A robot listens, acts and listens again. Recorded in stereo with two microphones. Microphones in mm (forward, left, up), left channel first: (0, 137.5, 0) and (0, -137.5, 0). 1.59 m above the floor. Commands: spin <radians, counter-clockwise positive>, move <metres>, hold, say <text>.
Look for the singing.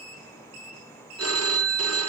hold
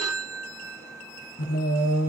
spin 1.05
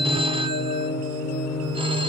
spin 1.13
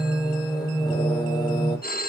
spin 0.26
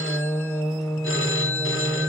say Facing the singing.